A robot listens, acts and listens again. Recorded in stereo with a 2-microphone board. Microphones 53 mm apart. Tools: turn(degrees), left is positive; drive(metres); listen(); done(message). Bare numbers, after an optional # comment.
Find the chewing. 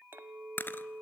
# The chewing: about 40° left or 140° left.
turn(40)
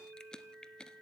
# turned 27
# So it is at 15° left.
turn(15)
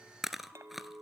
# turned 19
done("Facing the chewing, under 1 m away.")